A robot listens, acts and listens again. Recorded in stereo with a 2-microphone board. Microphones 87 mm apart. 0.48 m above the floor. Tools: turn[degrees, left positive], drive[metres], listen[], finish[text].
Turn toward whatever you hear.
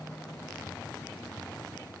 Action: listen[]
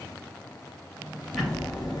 Action: turn[30]
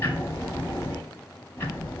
Thought: So it is at 150° left.
Action: turn[150]
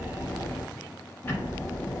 Thought: The ticking is now 25° left.
Action: turn[25]
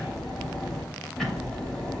Action: finish[Found it: ticking, straight ahead, under 1 m away.]